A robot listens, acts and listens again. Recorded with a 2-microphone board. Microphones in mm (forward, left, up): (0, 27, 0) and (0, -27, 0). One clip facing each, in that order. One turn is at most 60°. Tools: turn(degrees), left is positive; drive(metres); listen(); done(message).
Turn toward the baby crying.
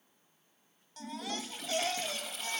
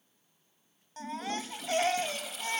turn(degrees=-35)
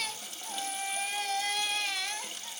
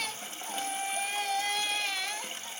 done("Found it: a baby crying, straight ahead.")